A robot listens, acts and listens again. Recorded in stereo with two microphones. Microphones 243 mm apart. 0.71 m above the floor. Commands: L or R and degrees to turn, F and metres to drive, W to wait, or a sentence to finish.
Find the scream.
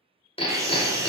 R30
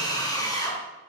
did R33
L20
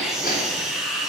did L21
Found it: a scream, straight ahead.